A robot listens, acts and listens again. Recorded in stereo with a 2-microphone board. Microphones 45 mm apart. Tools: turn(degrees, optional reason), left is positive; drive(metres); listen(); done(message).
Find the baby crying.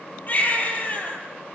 turn(degrees=45, reason="The baby crying: about 45° left or 135° left.")
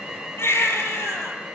turn(degrees=90, reason="So it is at 90° left.")
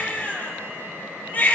turn(degrees=30, reason="The baby crying is now 30° left.")
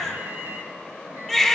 done("Found it: a baby crying, straight ahead, over 4 m away.")